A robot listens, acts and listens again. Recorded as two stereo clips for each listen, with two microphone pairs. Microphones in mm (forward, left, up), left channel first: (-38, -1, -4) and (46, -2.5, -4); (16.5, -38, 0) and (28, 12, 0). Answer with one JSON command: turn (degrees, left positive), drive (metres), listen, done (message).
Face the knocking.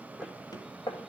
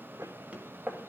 {"turn": 140}
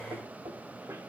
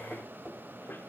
{"listen": true}
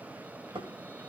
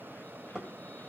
{"done": "Found it: knocking, straight ahead, 2 to 4 m away."}